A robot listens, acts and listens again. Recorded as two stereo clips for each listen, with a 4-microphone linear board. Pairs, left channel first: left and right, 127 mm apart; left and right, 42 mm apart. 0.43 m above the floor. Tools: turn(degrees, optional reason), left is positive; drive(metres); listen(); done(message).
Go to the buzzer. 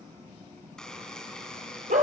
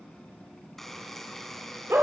turn(degrees=30)
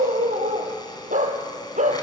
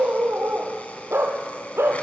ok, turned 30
listen()
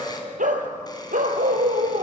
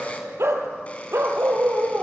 listen()
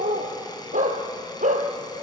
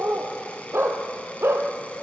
done("I heard a buzzer, but can't make it out now. It was about 25° right or 145° left. I did not reach it.")